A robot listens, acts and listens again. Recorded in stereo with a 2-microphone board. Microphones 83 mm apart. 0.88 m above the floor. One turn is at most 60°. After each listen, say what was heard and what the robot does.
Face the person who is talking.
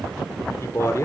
The man speaking: about 35° left or 145° left. Turn 35° left.
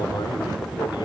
Keep listening.
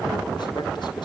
Keep listening.
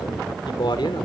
So it is at 110° left. Turn 60° left.
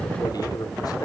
The man speaking is now 50° left. Turn 50° left.
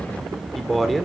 Found it: a man speaking, straight ahead, 2 to 4 m away.